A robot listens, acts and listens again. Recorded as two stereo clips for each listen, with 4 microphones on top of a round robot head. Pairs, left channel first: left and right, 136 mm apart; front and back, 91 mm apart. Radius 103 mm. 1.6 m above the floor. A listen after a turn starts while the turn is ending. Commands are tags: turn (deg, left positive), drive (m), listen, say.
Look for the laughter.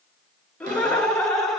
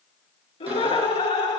<say>Facing the laughter.</say>